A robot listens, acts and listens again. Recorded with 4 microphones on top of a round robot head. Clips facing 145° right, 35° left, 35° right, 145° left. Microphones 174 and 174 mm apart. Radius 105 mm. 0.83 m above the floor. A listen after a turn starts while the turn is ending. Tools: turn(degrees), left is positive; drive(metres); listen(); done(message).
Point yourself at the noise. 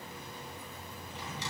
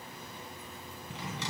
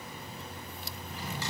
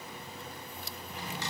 turn(degrees=45)
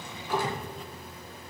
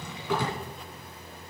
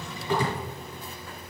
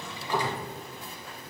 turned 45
done("Found it: a drawer, straight ahead.")